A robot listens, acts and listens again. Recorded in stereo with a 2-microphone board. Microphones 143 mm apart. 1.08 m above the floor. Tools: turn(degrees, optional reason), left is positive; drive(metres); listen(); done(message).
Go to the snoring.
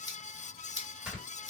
turn(degrees=-30)
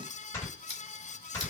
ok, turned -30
turn(degrees=25, reason="So it is at 25° left.")
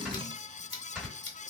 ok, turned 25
drive(metres=1.0)
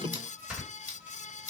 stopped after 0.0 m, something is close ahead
done("Something is in my way. I am facing the snoring but have not reached it.")